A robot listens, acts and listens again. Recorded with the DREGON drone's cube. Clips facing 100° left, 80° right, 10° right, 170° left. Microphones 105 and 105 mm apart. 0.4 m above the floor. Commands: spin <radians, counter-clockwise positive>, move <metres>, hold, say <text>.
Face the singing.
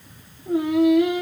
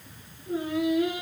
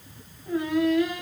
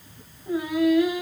spin 1.57
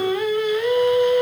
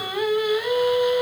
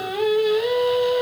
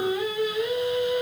say Facing the singing.